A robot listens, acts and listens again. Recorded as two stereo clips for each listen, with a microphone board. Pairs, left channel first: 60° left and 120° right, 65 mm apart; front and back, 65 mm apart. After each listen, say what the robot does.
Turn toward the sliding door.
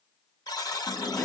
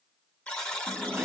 Turn 115° left.
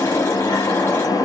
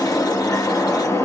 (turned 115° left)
Turn 40° left.
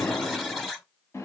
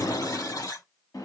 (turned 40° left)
Turn 15° left.
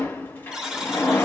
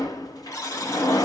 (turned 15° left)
Found it: a sliding door, straight ahead, 1 to 2 m away.